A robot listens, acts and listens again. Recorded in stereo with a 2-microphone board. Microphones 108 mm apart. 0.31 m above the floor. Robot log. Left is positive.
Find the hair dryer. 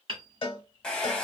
cmd yaw +30
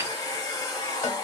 note: So it is at 140° left.
cmd yaw +140
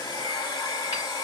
note: The hair dryer is now 45° left.
cmd yaw +45
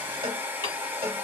note: The hair dryer is now 20° right.
cmd yaw -20
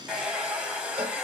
note: The hair dryer is now 10° right.
cmd yaw -10
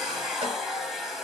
end: Found it: a hair dryer, straight ahead.